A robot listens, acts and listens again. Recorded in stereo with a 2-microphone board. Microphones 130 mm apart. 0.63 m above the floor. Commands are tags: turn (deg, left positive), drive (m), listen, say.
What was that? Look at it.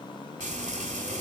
<turn deg="-75"/>
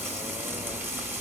<turn deg="-15"/>
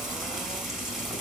<say>Facing the frying, 2 to 4 m away.</say>